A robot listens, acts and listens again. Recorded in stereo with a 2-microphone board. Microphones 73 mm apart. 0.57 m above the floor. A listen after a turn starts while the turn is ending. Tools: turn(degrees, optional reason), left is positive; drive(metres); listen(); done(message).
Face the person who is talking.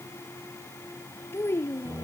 turn(degrees=35, reason="The child speaking: about 35° left or 145° left.")
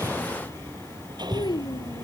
turn(degrees=110, reason="So it is at 110° left.")
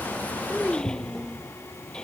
done("Facing the child speaking.")